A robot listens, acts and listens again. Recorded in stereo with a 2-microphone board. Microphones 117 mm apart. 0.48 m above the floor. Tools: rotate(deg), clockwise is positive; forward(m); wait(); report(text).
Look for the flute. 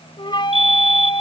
rotate(-45)
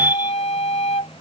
rotate(-85)
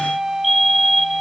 report("Facing the flute.")